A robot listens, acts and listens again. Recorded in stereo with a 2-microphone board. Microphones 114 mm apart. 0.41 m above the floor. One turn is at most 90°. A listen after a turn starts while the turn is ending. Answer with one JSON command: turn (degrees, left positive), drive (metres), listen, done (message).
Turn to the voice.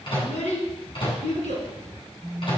{"turn": 90}
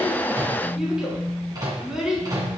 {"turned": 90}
{"done": "Facing the child speaking, 2 to 4 m away."}